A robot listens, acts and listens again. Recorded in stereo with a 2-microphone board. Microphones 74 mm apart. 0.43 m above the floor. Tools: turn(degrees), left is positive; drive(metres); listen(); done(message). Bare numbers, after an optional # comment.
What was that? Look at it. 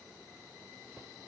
listen()
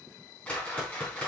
# The whoosh: about 20° left or 160° left.
turn(20)
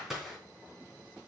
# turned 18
done("Found it: a whoosh, straight ahead.")